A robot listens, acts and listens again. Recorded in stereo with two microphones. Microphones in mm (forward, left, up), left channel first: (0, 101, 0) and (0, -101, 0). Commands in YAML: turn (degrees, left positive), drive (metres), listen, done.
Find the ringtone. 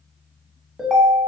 turn: 30
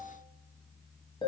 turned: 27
turn: 155
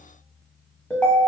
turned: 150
done: "Found it: a ringtone, straight ahead, under 1 m away."